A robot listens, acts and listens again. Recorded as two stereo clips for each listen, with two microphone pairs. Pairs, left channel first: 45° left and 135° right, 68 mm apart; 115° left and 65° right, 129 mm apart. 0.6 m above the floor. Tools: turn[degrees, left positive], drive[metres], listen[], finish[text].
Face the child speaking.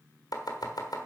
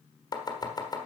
Action: listen[]
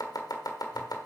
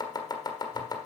Action: listen[]
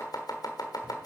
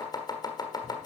Action: finish[I can't make out a child speaking, only chopping.]